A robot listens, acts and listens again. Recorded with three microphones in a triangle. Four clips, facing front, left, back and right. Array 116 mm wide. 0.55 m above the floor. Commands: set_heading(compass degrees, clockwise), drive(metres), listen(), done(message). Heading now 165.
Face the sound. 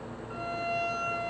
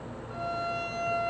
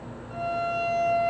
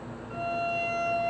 done("Facing the violin.")